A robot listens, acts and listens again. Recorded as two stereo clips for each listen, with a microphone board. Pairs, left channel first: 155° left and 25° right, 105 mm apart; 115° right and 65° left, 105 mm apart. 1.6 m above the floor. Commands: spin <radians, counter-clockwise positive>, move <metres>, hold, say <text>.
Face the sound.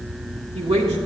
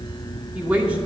spin -0.17
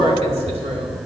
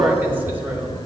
say Facing the woman speaking, 2 to 4 m away.